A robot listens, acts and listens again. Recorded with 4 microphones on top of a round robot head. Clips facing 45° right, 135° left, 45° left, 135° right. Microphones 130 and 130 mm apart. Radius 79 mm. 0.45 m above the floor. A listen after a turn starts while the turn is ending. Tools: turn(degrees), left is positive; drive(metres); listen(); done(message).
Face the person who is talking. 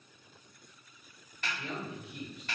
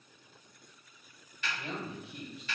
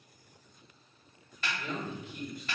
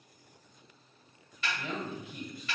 turn(degrees=-170)
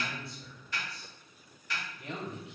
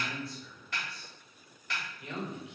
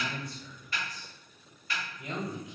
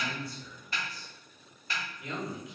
done("Facing the man speaking, 1 to 2 m away.")